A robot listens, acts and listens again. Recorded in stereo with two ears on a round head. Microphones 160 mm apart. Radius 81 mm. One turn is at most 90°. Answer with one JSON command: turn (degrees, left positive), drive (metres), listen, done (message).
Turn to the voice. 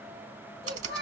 {"turn": 30}
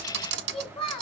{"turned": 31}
{"turn": 90}
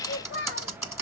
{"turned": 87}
{"turn": 50}
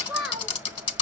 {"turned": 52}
{"done": "Facing the child speaking."}